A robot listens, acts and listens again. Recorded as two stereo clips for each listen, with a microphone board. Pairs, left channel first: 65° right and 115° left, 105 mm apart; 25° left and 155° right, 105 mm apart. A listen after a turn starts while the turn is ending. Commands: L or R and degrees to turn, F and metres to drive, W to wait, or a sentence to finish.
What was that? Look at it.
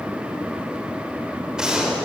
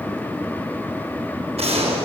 R165
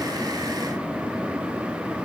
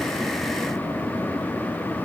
Facing where the gunshot came from. I can't hear it now.